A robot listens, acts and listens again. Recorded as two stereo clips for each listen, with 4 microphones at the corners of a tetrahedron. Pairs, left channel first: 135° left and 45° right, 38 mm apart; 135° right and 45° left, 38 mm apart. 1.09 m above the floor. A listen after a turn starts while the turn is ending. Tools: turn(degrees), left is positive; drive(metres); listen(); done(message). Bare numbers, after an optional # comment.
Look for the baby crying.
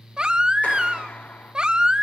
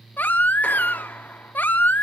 # The baby crying: 110° right.
turn(-110)
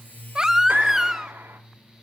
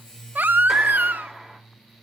# The baby crying is now 30° left.
turn(30)
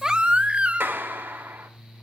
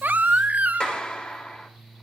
done("Found it: a baby crying, straight ahead.")